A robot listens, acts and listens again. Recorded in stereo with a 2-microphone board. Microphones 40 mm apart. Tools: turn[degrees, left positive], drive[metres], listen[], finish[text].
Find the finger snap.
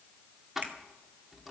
Thought: The finger snap: about 50° right or 130° right.
Action: turn[-50]
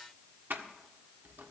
Action: listen[]
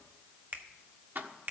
Thought: So it is at 70° right.
Action: turn[-70]
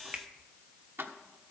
Thought: The finger snap is now 30° right.
Action: turn[-30]
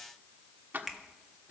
Action: finish[Found it: a finger snap, straight ahead, 1 to 2 m away.]